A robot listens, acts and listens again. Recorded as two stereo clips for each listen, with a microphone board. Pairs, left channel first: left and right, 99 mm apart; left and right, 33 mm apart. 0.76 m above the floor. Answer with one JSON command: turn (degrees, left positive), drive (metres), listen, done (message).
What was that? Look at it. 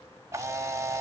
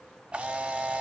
{"turn": -30}
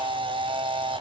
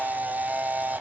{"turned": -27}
{"turn": -120}
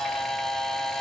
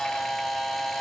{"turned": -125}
{"done": "Found it: a camera shutter, straight ahead."}